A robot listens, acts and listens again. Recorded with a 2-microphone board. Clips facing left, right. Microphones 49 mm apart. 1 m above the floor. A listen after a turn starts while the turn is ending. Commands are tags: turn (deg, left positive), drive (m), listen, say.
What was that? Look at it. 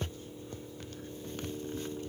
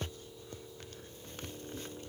<listen/>
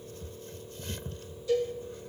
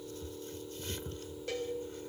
<turn deg="-65"/>
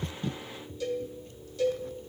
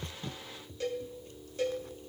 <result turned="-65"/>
<turn deg="-45"/>
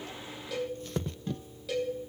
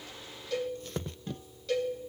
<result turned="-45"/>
<say>Facing the cowbell.</say>